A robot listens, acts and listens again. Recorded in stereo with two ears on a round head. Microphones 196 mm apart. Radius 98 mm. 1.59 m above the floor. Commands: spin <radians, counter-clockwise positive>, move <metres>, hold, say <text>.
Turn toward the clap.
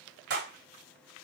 spin -0.87
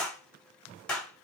say Found it: a clap, straight ahead.